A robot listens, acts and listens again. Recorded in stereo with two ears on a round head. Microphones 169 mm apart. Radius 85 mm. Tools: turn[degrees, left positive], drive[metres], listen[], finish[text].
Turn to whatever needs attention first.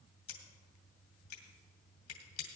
Action: listen[]
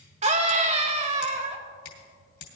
Thought: The scream: about 35° right or 145° right.
Action: turn[-35]
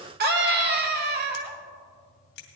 Thought: So it is at 100° right.
Action: turn[-100]
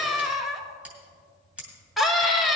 Action: finish[Facing the scream.]